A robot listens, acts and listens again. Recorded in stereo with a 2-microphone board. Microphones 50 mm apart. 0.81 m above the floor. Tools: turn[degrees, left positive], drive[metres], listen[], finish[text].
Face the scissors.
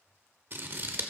Thought: The scissors: about 45° right or 135° right.
Action: turn[-45]
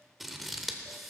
Action: finish[Found it: scissors, straight ahead.]